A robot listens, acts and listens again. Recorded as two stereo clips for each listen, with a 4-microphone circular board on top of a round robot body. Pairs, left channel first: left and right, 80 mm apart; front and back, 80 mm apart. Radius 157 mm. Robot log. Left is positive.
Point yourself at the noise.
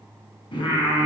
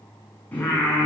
note: The singing: 70° left.
cmd yaw +70
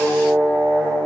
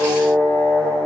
note: The singing is now 30° left.
cmd yaw +30
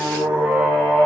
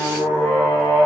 note: The singing is now 10° right.
cmd yaw -10
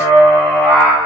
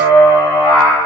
end: Found it: singing, straight ahead, over 4 m away.